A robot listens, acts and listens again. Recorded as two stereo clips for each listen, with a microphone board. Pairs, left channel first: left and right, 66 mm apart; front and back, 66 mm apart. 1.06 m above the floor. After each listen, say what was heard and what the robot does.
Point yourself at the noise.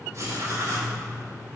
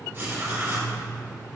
The writing: 120° right. Turn 120° right.
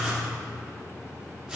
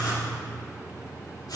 Found it: writing, straight ahead, 2 to 4 m away.